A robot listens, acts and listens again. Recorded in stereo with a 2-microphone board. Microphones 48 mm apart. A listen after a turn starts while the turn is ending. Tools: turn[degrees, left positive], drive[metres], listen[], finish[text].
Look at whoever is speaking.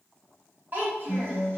Thought: The child speaking: about 40° right or 140° right.
Action: turn[-40]
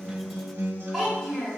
Action: finish[Facing the child speaking, 1 to 2 m away.]